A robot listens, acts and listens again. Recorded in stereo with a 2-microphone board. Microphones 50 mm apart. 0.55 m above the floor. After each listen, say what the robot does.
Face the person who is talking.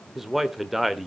Turn 30° right.
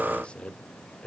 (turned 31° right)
Turn 25° left.
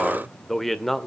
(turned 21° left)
Found it: a man speaking, straight ahead, 1 to 2 m away.